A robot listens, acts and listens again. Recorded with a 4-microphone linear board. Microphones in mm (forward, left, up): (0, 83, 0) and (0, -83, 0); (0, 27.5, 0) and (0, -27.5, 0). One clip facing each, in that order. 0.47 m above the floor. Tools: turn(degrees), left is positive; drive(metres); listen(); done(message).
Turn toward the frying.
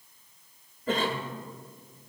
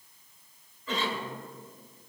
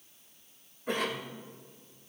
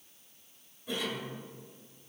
listen()
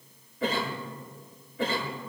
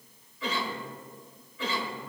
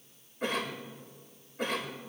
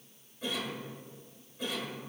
listen()
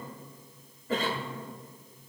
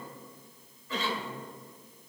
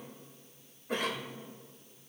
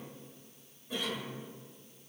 done("I can't make out frying to turn to.")